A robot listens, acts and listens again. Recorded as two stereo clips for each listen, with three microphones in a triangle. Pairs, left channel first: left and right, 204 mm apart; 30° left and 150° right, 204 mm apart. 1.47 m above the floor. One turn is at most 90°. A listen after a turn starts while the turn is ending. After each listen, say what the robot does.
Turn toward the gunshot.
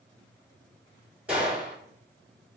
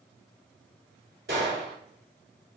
Turn 90° right.
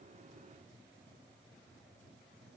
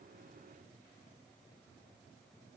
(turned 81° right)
Turn 90° right.
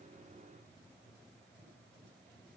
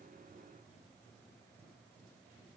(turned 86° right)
I heard a gunshot from this way, but can't make it out now.